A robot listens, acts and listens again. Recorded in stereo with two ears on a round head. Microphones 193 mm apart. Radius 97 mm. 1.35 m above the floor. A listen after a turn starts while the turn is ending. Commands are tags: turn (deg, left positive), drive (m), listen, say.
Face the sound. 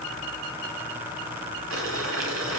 <turn deg="-70"/>
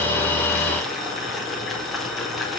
<say>Facing the boiling.</say>